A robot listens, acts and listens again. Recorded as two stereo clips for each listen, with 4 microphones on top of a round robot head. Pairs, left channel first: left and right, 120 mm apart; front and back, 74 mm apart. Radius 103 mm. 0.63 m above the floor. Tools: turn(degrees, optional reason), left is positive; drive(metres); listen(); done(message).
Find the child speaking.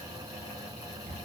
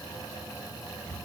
listen()
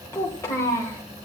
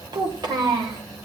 turn(degrees=160, reason="The child speaking: 160° left.")
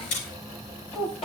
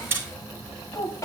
turn(degrees=45, reason="The child speaking is now 45° left.")
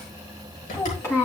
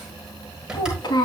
turn(degrees=20, reason="The child speaking is now 20° left.")
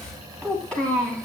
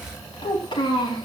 done("Found it: a child speaking, straight ahead, over 4 m away.")